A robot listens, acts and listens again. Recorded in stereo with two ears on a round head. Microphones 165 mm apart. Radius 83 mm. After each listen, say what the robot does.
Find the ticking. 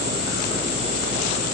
Keep listening.
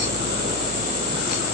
Keep listening.
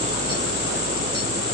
I can't make out ticking to turn to.